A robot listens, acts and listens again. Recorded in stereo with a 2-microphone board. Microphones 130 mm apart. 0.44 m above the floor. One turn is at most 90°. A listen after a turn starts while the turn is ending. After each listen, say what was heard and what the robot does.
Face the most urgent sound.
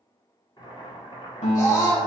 The scream: about 25° left or 155° left. Turn 25° left.
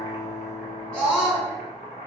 Facing the scream, 1 to 2 m away.